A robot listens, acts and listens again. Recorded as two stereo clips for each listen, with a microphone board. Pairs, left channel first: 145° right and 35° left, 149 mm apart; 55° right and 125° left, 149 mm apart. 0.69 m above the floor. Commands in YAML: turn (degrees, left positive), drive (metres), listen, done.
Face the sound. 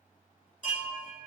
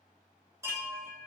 turn: -165
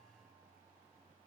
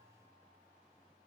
listen: true
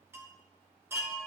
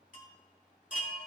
turn: -40
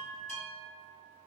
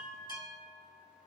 done: "Facing the chime, 2 to 4 m away."